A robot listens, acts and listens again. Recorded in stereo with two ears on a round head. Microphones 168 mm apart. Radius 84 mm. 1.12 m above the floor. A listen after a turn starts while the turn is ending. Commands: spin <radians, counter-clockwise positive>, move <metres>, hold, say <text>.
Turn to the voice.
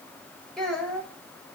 spin 0.52
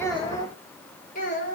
spin 2.27
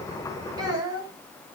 spin -0.44
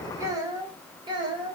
spin -0.44
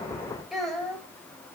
say Facing the child speaking, 2 to 4 m away.